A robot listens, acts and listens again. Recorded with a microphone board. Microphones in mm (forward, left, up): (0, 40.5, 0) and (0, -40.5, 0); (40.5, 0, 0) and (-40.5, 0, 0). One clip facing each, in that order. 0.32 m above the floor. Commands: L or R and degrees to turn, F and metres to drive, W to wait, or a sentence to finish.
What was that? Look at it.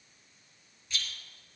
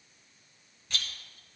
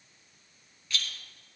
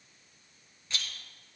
R120
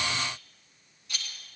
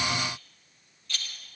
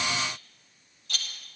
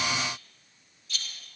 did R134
L15
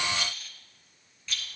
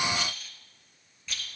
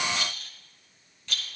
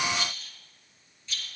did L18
Found it: a rattle, straight ahead, 1 to 2 m away.